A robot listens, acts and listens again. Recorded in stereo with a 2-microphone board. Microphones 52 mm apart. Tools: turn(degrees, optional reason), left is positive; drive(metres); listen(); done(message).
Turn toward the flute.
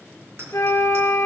turn(degrees=65, reason="The flute: about 65° left or 115° left.")
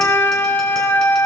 turn(degrees=50, reason="So it is at 50° left.")
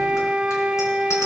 turn(degrees=-15, reason="The flute is now 15° right.")
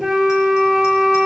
done("Found it: a flute, straight ahead.")